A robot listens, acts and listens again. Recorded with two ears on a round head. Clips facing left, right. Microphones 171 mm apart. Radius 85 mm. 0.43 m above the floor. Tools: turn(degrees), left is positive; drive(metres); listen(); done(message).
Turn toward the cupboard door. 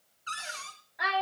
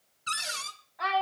turn(degrees=-45)
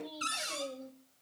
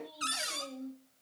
turn(degrees=-10)
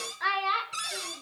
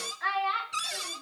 done("Found it: a cupboard door, straight ahead, 1 to 2 m away.")